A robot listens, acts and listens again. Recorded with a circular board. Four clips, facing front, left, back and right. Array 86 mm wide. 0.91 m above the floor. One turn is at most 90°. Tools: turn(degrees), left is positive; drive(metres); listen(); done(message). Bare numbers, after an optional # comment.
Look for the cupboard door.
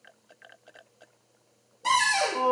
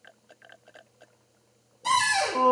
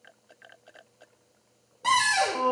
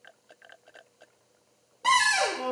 # The cupboard door: 125° right.
turn(-90)
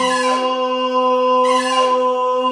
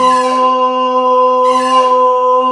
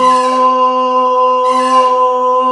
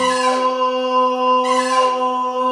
# Nothing new. It was at 35° right.
turn(-35)
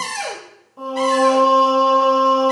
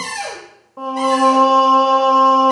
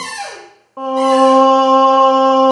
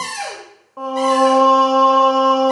# The cupboard door is now 30° right.
turn(-30)
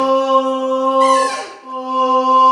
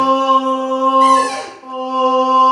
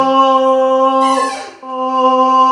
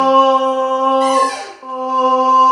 done("Found it: a cupboard door, straight ahead, 1 to 2 m away.")